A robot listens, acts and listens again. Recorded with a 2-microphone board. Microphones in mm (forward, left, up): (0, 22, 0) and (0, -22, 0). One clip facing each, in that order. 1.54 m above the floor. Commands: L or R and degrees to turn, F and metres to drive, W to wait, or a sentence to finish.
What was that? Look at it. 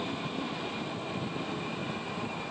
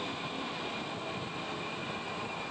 W
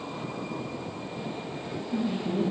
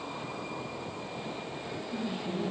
L90
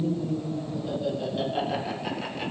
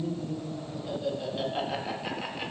Found it: laughter, straight ahead.